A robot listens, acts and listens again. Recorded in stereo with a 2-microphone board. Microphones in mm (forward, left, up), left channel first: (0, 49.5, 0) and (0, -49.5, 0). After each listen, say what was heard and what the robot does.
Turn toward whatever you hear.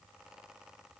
Keep listening.
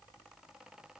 Keep listening.
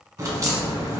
The crack: about 35° right or 145° right. Turn 35° right.
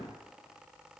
Keep listening.
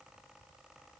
I heard a crack, but can't make it out now. It was about straight ahead or 110° right.